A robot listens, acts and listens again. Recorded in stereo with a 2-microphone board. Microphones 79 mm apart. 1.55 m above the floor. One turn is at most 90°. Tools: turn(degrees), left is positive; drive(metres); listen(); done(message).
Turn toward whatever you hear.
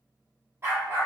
turn(degrees=-30)
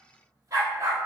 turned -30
turn(degrees=-40)
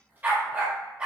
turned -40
turn(degrees=-10)
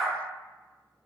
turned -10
done("Facing the dog barking, 1 to 2 m away.")